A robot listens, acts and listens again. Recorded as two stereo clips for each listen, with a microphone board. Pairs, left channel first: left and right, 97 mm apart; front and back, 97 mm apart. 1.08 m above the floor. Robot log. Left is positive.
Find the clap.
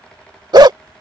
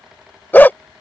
cmd idle
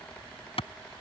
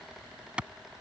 note: The clap: 100° left.
cmd yaw +100
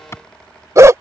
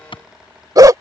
note: The clap is now 25° left.
cmd yaw +25
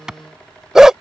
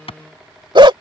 end: Found it: a clap, straight ahead.